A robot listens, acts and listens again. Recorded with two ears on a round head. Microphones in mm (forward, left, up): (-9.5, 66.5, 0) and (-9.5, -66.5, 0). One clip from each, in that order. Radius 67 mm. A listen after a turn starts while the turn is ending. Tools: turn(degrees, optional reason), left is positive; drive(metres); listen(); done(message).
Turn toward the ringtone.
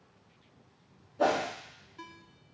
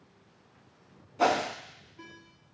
turn(degrees=70, reason="The ringtone: about 70° left or 110° left.")
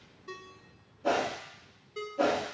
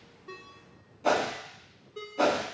turn(degrees=40, reason="So it is at 40° left.")
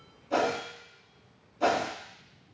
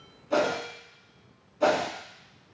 listen()
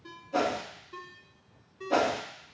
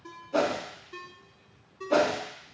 done("Found it: a ringtone, straight ahead, under 1 m away.")